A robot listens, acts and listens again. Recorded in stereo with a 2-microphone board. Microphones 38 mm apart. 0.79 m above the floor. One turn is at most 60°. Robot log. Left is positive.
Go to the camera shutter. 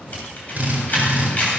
note: The camera shutter: about 40° left or 140° left.
cmd yaw +40
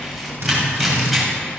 cmd fwd 1.0
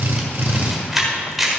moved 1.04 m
cmd fwd 1.0
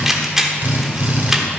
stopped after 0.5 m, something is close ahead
note: The camera shutter is now 10° right.
cmd yaw -10
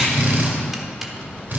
cmd idle
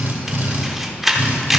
end: I am next to the camera shutter.